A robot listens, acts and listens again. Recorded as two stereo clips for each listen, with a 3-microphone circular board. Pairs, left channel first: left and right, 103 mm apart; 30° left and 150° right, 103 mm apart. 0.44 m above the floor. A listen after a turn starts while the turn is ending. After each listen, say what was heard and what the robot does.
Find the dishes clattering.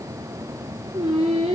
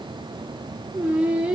Keep listening.
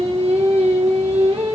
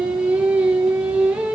Keep listening.
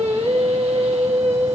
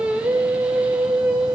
I can't make out dishes clattering, only singing.